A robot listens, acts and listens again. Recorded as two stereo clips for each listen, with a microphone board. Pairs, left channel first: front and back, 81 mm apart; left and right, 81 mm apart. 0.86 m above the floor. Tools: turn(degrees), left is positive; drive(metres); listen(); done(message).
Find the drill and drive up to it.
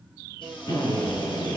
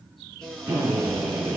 turn(degrees=-25)
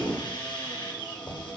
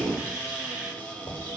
turn(degrees=-15)
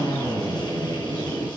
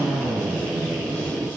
drive(metres=1.0)
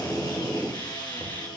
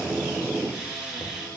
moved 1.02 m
turn(degrees=-10)
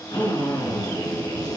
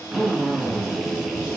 drive(metres=1.0)
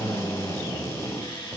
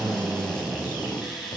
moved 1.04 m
drive(metres=1.0)
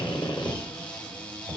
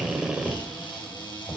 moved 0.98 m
turn(degrees=-10)
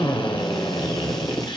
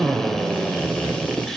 drive(metres=1.0)
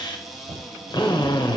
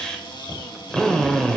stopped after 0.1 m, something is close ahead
turn(degrees=10)
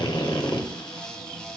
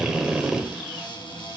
done("I am next to the drill.")